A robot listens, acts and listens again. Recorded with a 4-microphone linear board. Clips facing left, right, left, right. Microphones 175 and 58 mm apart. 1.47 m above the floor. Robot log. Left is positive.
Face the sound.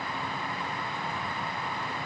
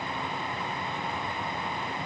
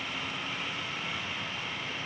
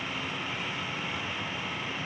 cmd idle
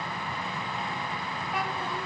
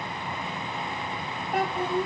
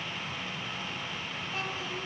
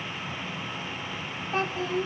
note: The child speaking: about 50° right or 130° right.
cmd yaw -50
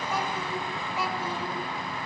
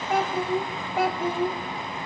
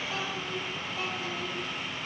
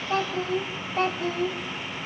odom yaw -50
note: So it is at 55° right.
cmd yaw -55
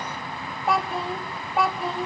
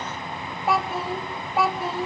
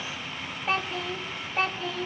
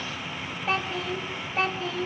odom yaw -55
end: Found it: a child speaking, straight ahead.